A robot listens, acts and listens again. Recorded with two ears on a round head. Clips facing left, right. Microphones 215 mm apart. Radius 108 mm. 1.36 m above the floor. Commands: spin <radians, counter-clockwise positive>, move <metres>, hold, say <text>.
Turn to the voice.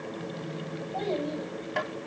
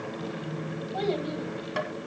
spin -0.44
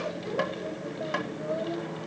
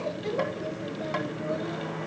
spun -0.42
spin -2.44
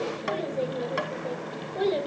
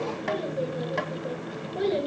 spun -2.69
say Found it: a child speaking, straight ahead, over 4 m away.